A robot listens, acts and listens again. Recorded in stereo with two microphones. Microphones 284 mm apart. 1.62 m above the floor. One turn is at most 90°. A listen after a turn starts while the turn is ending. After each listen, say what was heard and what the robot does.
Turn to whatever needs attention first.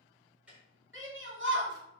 The shout: about 45° right or 135° right. Turn 45° right.
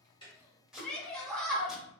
Found it: a shout, straight ahead.